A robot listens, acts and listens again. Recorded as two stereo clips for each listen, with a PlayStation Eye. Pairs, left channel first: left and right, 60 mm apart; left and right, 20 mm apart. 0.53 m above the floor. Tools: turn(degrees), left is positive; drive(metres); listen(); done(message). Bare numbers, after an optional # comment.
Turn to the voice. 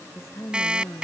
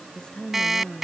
# The woman speaking: about 50° left or 130° left.
turn(50)
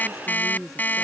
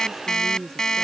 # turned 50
done("Facing the woman speaking.")